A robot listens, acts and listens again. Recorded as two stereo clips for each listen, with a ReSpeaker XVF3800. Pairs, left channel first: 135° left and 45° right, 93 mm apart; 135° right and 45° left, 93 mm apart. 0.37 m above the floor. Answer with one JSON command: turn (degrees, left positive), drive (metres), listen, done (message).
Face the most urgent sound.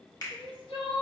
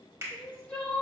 {"turn": 150}
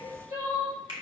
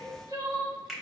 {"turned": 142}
{"done": "Facing the crying, 1 to 2 m away."}